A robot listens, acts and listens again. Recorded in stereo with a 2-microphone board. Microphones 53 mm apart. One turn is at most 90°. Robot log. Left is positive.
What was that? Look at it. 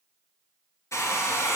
note: The hair dryer: about 75° left or 105° left.
cmd yaw +75
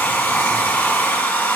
note: So it is at 30° left.
cmd yaw +30
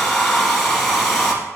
end: Facing the hair dryer, 2 to 4 m away.